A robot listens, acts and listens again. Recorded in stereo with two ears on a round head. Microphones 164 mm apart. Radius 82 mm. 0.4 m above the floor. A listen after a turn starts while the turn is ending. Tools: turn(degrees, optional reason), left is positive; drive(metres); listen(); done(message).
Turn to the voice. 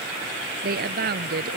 turn(degrees=-55, reason="The woman speaking: about 55° right or 125° right.")
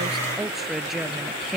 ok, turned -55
done("Found it: a woman speaking, straight ahead.")